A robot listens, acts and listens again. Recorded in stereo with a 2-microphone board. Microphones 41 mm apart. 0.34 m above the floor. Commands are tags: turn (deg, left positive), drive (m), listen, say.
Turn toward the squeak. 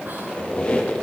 <turn deg="25"/>
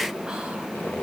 <turn deg="130"/>
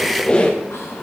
<turn deg="25"/>
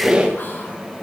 <turn deg="-20"/>
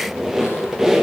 <turn deg="-10"/>
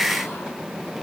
<listen/>
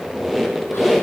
<say>Found it: a squeak, straight ahead, 2 to 4 m away.</say>